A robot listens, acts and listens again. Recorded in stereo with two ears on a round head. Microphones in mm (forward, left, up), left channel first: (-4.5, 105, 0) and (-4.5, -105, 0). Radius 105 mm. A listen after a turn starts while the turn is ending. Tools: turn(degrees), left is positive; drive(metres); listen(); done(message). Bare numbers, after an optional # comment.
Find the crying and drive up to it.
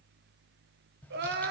# The crying: about 45° right or 135° right.
turn(-45)
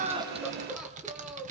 drive(1.0)
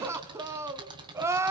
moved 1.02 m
# The crying is now 10° right.
turn(-10)
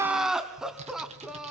drive(1.0)
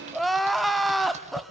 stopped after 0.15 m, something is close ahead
done("I am next to the crying.")